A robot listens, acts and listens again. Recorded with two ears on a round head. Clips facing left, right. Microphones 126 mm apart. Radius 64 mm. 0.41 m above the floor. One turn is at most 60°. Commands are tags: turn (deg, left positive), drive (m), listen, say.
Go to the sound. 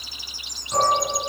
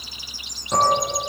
<turn deg="-45"/>
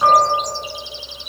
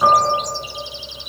<drive m="1.0"/>
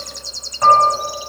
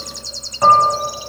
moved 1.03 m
<drive m="1.0"/>
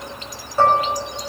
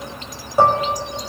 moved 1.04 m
<turn deg="-15"/>
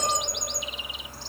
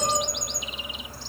<listen/>
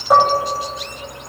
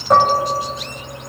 <drive m="1.0"/>
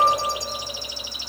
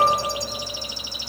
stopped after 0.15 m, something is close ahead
<turn deg="10"/>
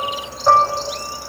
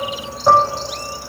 <say>Arrived at the dishes clattering, straight ahead.</say>